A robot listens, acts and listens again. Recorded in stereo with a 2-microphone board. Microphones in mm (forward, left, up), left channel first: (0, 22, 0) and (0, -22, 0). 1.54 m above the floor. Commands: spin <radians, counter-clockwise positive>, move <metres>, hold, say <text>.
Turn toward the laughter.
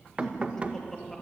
spin 0.52
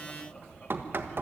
spin 2.71
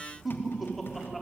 say Facing the laughter.